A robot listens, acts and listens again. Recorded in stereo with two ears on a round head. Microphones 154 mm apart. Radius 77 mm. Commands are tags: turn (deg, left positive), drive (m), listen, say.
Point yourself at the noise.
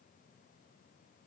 <listen/>
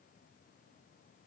<listen/>
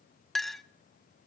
<turn deg="30"/>
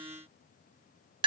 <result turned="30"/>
<turn deg="-30"/>
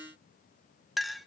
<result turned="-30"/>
<say>Found it: a clink, straight ahead.</say>